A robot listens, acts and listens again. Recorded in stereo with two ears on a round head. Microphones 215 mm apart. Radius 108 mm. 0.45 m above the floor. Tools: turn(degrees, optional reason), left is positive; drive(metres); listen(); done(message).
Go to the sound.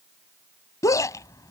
turn(degrees=30)
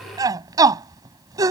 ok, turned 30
turn(degrees=-15, reason="So it is at 15° right.")
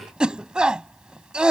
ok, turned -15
drive(metres=1.0)
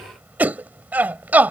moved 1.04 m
turn(degrees=-10, reason="The shout is now 10° right.")
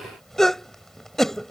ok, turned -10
drive(metres=1.0)
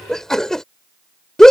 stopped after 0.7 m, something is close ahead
done("Arrived at the shout, straight ahead.")